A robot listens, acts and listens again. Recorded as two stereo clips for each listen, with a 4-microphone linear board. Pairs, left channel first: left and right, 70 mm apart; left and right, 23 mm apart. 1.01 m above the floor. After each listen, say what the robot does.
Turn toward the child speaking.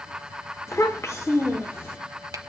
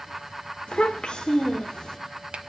Turn 40° left.
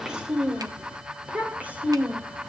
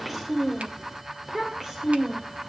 Turn 25° right.
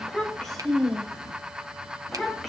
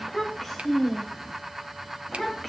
Facing the child speaking.